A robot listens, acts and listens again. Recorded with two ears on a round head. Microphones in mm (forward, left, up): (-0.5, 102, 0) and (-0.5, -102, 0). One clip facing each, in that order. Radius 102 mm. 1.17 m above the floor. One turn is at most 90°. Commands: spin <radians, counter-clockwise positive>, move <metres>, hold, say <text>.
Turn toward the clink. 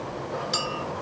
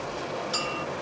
spin 0.61
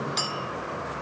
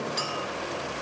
spin 1.57
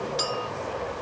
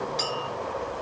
spin 0.17
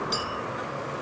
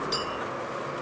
say Facing the clink.